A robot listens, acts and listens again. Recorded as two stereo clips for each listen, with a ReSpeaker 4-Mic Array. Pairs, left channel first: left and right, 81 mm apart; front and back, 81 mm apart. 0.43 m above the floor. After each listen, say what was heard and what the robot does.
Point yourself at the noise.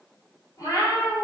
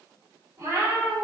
The cat meowing: 130° left. Turn 130° left.
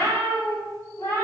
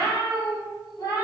The cat meowing is now 35° left. Turn 35° left.
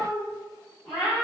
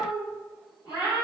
Found it: a cat meowing, straight ahead, 1 to 2 m away.